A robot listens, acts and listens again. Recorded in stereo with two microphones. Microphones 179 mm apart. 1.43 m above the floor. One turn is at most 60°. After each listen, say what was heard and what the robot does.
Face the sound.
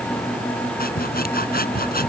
The sawing: about 60° left or 120° left. Turn 60° left.
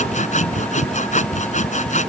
So it is at 50° left. Turn 50° left.
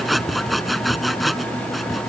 Found it: sawing, straight ahead.